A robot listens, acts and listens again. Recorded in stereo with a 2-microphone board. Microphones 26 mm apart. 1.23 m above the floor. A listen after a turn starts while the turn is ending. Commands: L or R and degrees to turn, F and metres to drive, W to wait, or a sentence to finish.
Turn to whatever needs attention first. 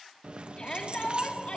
L40
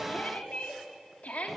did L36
L105
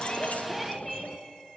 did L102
Found it: a shout, straight ahead, 2 to 4 m away.